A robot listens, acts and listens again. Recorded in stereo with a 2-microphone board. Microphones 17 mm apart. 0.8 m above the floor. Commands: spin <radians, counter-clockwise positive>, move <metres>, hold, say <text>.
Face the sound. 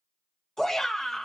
spin 0.52
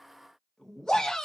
spin 2.01
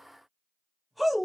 say Found it: a shout, straight ahead, 1 to 2 m away.